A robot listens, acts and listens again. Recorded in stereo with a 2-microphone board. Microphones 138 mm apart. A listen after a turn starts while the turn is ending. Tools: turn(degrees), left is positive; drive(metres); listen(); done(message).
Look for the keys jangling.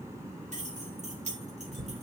turn(degrees=-60)
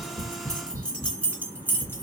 turn(degrees=15)
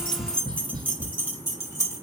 turn(degrees=25)
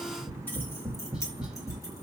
listen()
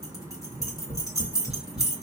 turn(degrees=25)
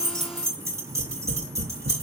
turn(degrees=-20)
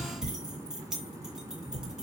done("Found it: keys jangling, straight ahead, 2 to 4 m away.")